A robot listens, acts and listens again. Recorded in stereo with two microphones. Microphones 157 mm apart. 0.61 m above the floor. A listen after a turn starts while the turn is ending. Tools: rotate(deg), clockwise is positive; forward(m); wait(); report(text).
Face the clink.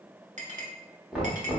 rotate(50)
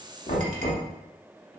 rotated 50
wait()
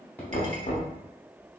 wait()
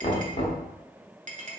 rotate(65)
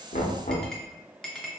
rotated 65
report("Found it: a clink, straight ahead, under 1 m away.")